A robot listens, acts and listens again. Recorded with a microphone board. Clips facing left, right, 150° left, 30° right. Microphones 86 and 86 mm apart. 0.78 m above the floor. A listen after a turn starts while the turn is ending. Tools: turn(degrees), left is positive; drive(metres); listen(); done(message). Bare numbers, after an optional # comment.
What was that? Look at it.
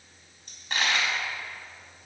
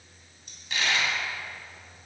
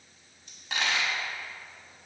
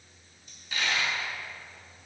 # The dropped coin: 135° left.
turn(135)
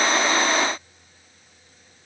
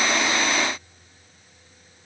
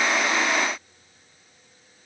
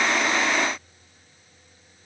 done("I heard a dropped coin from this way, but can't make it out now.")